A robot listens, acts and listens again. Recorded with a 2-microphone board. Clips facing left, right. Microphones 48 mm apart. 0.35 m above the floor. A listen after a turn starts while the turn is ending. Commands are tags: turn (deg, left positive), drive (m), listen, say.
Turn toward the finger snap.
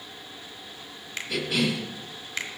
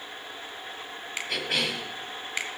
<turn deg="-30"/>
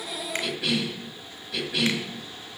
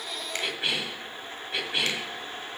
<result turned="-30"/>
<listen/>
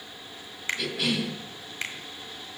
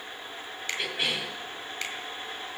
<turn deg="20"/>
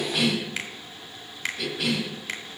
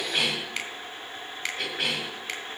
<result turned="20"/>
<say>Found it: a finger snap, straight ahead, 1 to 2 m away.</say>